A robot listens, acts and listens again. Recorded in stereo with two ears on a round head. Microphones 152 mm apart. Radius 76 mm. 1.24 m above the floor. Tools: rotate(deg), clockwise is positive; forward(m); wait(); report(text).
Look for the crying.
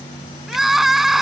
rotate(-30)
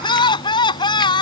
rotate(-150)
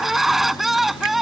report("Found it: crying, straight ahead.")